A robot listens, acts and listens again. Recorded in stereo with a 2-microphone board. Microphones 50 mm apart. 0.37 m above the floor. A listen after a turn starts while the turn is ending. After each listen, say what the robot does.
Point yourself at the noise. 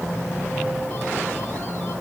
Keep listening.
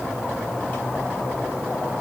Keep listening.
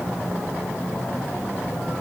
I can't make out anything to turn to.